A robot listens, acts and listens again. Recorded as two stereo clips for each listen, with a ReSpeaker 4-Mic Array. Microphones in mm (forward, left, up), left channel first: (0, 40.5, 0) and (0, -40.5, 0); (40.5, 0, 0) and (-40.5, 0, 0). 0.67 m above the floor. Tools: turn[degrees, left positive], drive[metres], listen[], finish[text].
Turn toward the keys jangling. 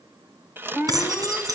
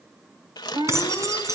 Thought: The keys jangling: 130° right.
Action: turn[-130]
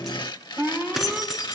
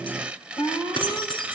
Action: finish[Found it: keys jangling, straight ahead.]